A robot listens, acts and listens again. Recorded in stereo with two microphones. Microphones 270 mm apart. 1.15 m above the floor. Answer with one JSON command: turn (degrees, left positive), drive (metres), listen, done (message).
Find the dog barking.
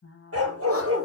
{"turn": -60}
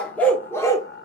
{"turn": 10}
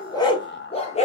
{"turn": 25}
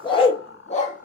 {"turn": 30}
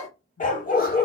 {"turn": 35}
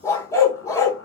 {"turn": 10}
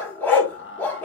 {"done": "Found it: a dog barking, straight ahead, 1 to 2 m away."}